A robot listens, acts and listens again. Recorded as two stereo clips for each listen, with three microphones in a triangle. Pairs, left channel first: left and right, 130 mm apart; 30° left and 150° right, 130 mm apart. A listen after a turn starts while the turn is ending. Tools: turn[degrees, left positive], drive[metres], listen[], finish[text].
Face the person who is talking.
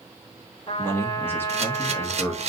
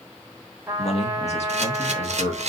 Thought: The man speaking: 20° left.
Action: turn[20]
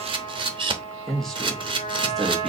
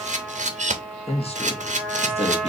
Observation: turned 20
Action: finish[Found it: a man speaking, straight ahead.]